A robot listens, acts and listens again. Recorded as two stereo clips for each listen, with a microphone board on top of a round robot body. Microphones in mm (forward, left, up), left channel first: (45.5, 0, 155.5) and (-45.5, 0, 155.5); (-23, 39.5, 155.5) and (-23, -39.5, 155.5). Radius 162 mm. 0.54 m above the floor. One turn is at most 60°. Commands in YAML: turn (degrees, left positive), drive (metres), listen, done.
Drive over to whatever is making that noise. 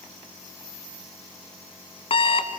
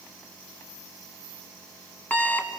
turn: 20
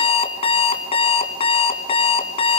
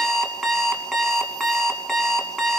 drive: 1.0
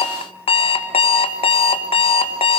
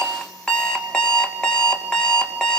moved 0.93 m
turn: 10
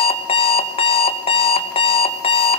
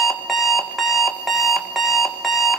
drive: 1.0
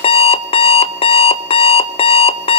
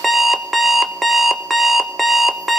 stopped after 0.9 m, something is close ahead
done: "Arrived at the alarm clock, straight ahead."